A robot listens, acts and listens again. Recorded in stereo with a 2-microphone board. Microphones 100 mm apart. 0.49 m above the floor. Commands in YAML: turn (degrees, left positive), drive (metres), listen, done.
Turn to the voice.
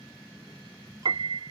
listen: true
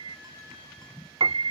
listen: true
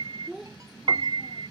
turn: -30
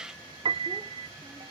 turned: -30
listen: true
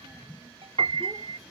listen: true
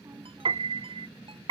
done: "I heard a child speaking, but can't make it out now. It was about 25° left or 145° right."